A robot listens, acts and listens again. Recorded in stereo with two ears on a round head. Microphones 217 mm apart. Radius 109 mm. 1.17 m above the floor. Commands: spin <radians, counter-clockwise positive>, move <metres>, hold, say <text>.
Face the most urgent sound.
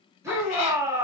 spin -0.52
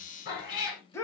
spin 0.26
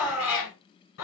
say Found it: a shout, straight ahead.